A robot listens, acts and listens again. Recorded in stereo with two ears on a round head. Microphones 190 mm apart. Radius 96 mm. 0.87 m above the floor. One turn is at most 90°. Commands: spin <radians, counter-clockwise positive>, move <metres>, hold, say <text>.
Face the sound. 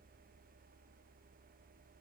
hold
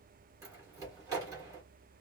spin -0.26
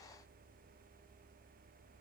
hold
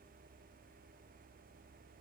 say I heard a door slam, but can't make it out now. It was about straight ahead or 150° right.